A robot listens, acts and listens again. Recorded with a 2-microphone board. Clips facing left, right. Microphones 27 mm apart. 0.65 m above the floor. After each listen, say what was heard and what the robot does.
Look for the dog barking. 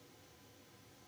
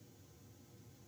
Keep listening.
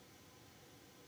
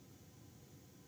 Keep listening.
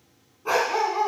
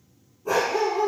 The dog barking: about 40° left or 140° left. Turn 40° left.
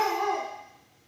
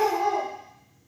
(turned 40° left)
So it is at 105° left. Turn 105° left.
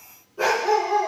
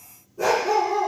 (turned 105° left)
The dog barking is now 50° left. Turn 50° left.
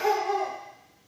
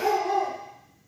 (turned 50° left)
The dog barking is now 10° left. Turn 10° left.
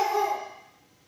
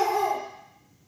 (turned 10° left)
Facing the dog barking.